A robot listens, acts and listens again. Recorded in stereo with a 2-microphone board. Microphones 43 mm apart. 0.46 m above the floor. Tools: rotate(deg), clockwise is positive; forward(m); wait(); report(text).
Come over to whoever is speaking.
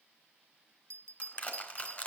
wait()
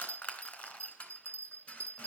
wait()
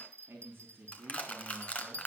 rotate(60)
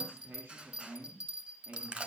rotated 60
rotate(60)
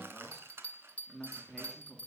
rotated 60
forward(1.0)
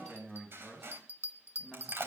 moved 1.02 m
forward(1.0)
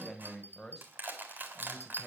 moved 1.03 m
forward(1.0)
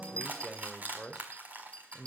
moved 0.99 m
rotate(-10)
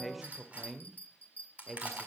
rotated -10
forward(1.0)
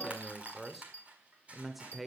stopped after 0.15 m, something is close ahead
report("Arrived at the man speaking, straight ahead.")